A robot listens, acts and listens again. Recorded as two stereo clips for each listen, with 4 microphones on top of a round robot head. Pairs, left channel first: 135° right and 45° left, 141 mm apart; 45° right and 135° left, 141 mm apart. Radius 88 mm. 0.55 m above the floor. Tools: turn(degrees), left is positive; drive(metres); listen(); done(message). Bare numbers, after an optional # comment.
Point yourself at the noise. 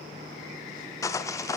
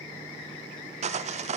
# The sawing: 160° left.
turn(160)
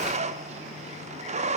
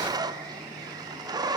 # The sawing is now 75° left.
turn(75)
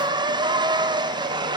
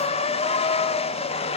# The sawing is now 10° right.
turn(-10)
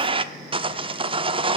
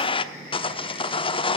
done("Facing the sawing, under 1 m away.")